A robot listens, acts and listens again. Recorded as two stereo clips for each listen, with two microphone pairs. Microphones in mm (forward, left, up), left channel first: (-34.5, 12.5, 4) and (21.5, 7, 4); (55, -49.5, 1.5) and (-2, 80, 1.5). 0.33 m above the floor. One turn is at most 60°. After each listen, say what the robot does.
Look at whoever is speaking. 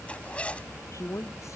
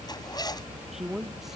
Turn 60° right.
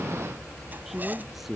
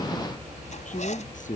Turn 60° right.
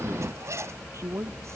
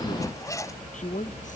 Turn 40° right.
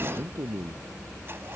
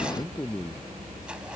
Found it: a man speaking, straight ahead.